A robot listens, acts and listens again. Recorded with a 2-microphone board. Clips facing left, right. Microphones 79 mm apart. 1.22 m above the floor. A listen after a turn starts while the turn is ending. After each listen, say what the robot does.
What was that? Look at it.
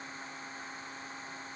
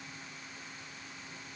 Keep listening.
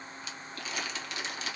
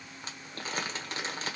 Turn 35° right.
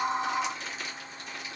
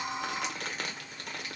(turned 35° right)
Turn 100° right.
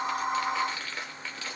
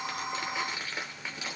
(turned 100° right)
Turn 20° right.
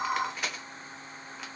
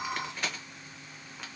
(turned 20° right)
Facing the crumpling.